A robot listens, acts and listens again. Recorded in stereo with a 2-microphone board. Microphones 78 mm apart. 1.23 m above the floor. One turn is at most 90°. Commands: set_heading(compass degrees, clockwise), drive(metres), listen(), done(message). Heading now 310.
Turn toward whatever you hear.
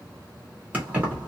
set_heading(330)
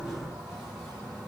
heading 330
listen()
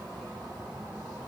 listen()
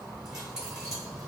set_heading(0)
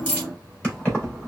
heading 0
set_heading(340)
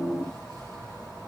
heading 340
set_heading(350)
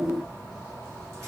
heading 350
done("Found it: keys jangling, straight ahead.")